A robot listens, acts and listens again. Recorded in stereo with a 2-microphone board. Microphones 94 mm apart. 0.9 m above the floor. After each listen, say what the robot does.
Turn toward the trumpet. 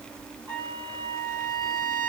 Turn 40° right.
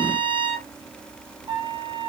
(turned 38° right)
Turn 100° right.
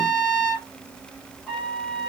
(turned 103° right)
Facing the trumpet, 2 to 4 m away.